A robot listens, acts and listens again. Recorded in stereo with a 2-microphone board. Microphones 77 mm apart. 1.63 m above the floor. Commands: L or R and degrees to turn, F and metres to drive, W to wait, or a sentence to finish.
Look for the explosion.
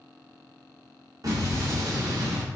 R45
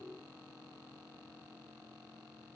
W
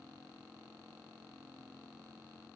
I heard an explosion, but can't make it out now. It was about straight ahead or 90° right.